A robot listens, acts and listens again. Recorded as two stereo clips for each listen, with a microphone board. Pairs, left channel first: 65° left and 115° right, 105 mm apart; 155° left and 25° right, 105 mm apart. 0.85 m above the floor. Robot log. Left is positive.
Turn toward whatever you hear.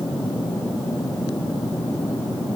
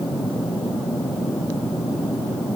cmd idle
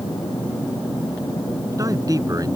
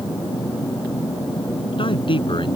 note: The man speaking: 165° right.
cmd yaw -165
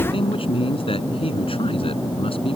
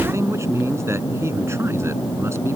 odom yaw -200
note: The man speaking is now 40° left.
cmd yaw +40
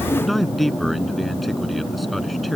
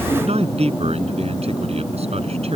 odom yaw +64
note: The man speaking is now 20° right.
cmd yaw -20
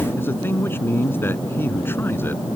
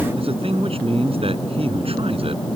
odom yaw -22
end: Found it: a man speaking, straight ahead.